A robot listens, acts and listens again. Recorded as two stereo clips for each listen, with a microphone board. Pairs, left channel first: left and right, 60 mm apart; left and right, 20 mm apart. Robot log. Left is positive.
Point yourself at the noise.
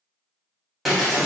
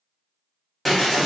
cmd yaw +30
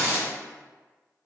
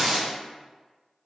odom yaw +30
note: So it is at 30° right.
cmd yaw -30
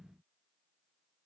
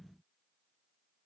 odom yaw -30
end: Facing where the breaking glass came from. I can't hear it now.